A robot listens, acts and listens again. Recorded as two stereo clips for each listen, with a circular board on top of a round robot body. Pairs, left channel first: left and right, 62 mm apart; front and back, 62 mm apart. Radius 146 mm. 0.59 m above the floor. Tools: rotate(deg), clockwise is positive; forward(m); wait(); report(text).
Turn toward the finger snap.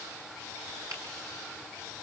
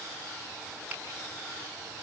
wait()
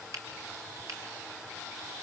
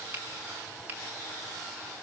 rotate(120)
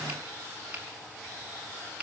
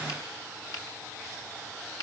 rotate(20)
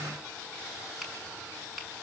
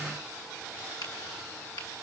report("Facing the finger snap, over 4 m away.")